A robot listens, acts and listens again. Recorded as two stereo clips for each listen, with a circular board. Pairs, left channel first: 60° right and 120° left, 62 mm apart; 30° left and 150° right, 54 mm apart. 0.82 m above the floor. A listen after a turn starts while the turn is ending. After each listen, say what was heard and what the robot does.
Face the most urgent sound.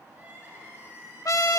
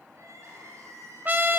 The crying: straight behind. Turn 180° left.
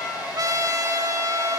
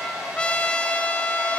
Keep listening.
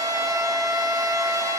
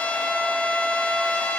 Keep listening.
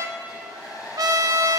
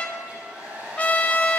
I heard crying from this way, but can't make it out now.